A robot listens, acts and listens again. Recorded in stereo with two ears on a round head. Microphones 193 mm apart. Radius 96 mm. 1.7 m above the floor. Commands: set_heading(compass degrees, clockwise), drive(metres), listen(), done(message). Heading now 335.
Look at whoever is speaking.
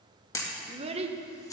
set_heading(5)
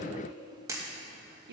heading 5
set_heading(120)
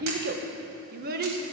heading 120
set_heading(175)
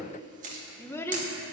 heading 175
set_heading(160)
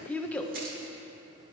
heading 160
done("Found it: a child speaking, straight ahead.")